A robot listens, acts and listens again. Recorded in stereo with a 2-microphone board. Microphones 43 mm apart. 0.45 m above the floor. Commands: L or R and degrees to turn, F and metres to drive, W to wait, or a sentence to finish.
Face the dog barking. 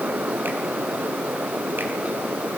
W
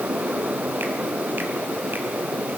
W
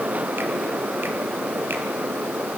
I can't make out a dog barking.